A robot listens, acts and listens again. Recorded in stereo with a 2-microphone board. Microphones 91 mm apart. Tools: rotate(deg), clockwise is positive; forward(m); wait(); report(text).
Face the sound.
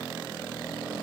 wait()
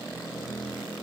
wait()
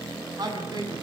rotate(45)
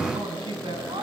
rotate(85)
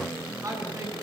rotate(40)
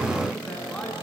rotate(-10)
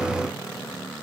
wait()
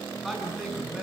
report("Found it: a man speaking, straight ahead.")